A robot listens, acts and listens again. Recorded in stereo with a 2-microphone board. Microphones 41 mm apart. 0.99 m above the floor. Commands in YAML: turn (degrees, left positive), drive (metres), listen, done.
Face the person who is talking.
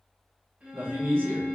turn: -60
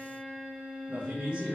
turn: -30
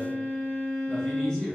turn: 20
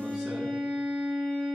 listen: true
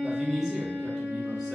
done: "Found it: a man speaking, straight ahead."